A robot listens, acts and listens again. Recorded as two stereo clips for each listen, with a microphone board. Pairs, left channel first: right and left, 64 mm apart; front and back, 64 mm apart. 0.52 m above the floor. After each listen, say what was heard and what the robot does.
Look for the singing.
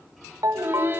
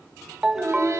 The singing: 140° left. Turn 140° left.
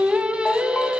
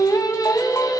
The singing is now 15° left. Turn 15° left.
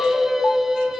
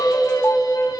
Facing the singing, 2 to 4 m away.